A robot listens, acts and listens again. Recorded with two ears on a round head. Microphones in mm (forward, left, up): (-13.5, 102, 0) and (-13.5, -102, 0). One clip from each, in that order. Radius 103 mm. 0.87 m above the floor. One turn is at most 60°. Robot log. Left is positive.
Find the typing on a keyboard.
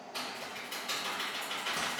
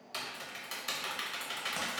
note: The typing on a keyboard: about 55° right or 125° right.
cmd yaw -55
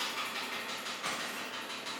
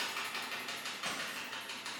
note: So it is at 25° right.
cmd yaw -25
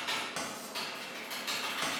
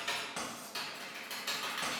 note: The typing on a keyboard is now 10° right.
cmd yaw -10
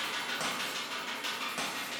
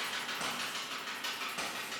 end: Facing the typing on a keyboard, under 1 m away.